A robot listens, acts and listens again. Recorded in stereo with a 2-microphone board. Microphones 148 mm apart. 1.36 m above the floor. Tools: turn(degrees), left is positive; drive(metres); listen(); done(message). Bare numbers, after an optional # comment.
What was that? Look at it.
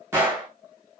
# The gunshot: about 15° right or 165° right.
turn(-15)
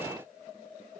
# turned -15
listen()
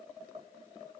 done("I heard a gunshot, but can't make it out now. It was about straight ahead or 150° right.")